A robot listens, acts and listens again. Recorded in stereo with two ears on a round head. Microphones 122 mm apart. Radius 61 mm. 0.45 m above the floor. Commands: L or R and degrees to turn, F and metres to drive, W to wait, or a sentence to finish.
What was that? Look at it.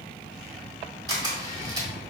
R30
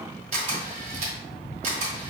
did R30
R115
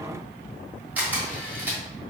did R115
R15
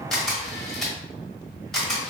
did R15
Found it: a camera shutter, straight ahead.